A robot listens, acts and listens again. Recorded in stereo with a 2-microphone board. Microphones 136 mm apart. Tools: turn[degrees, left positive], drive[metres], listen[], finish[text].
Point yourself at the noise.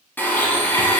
Action: turn[30]
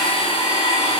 Thought: So it is at 135° left.
Action: turn[135]
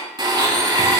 Thought: The blender is now 35° right.
Action: turn[-35]
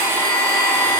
Thought: The blender is now 20° right.
Action: turn[-20]
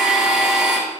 Action: finish[Facing the blender.]